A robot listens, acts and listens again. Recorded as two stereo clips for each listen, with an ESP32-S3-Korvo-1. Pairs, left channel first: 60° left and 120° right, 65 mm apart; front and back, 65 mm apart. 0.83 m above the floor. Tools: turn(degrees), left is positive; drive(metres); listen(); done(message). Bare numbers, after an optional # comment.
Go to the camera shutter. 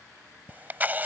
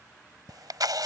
# The camera shutter: 175° left.
turn(175)
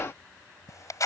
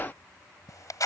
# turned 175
# The camera shutter is now 25° left.
turn(25)
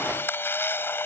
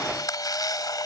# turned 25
drive(1.0)
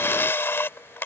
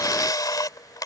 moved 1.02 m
drive(1.0)
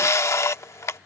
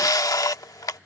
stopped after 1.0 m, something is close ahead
# The camera shutter is now 20° left.
turn(20)
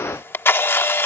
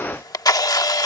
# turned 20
done("I am next to the camera shutter.")